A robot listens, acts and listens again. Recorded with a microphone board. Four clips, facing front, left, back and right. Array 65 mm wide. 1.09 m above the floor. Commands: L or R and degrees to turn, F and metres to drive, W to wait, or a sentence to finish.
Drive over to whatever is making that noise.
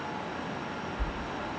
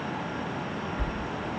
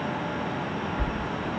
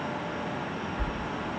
L165
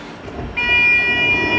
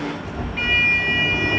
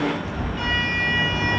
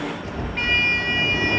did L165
R10
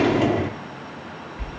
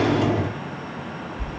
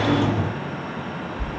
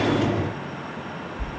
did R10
F1.0
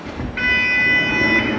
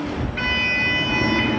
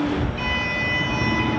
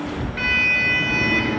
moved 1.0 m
F1.0
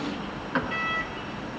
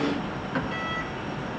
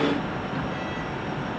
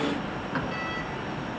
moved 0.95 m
F1.0
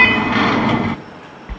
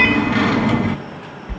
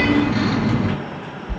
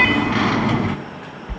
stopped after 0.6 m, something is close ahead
I am next to the sliding door.